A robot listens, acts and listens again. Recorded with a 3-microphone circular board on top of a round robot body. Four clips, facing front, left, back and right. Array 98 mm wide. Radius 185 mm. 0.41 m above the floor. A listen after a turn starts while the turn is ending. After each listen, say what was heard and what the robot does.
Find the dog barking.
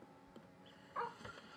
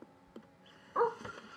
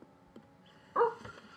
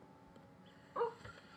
The dog barking: 150° left. Turn 150° left.
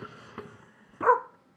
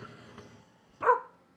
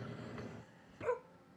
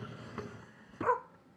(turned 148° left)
The dog barking is now 20° left. Turn 20° left.
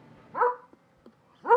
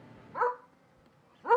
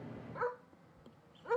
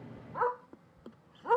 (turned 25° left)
The dog barking is now 10° left. Turn 10° left.
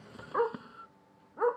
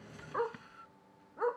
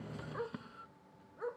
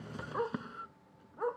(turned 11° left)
Found it: a dog barking, straight ahead.